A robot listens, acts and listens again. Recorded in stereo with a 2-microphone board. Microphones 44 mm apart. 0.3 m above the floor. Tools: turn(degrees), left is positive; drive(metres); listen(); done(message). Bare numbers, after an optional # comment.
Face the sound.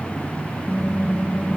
turn(-30)
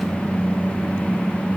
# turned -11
done("Found it: typing on a keyboard, straight ahead, over 4 m away.")